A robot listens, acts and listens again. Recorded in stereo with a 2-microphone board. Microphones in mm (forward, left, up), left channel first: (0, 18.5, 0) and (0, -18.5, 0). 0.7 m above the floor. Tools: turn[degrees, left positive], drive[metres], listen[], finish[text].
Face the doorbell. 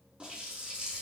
Action: listen[]
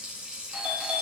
Thought: The doorbell: about 35° right or 145° right.
Action: turn[-35]
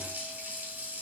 Action: listen[]
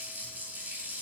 Action: listen[]
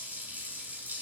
Action: finish[I heard a doorbell, but can't make it out now. It was about straight ahead or 110° right.]